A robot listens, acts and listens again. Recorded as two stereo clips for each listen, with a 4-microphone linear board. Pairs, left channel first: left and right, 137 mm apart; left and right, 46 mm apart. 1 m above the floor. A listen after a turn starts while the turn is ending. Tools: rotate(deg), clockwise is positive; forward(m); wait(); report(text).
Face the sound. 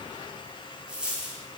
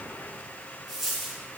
rotate(30)
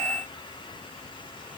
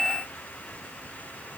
wait()
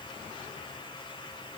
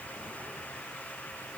report("I heard a dropped coin, but can't make it out now. It was about 20° left or 140° right.")